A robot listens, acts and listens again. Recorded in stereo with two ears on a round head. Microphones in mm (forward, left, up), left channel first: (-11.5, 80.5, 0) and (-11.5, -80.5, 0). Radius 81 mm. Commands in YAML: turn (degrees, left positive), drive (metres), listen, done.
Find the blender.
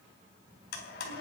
turn: 65
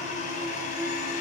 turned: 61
turn: 45
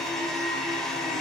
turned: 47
done: "Facing the blender, 2 to 4 m away."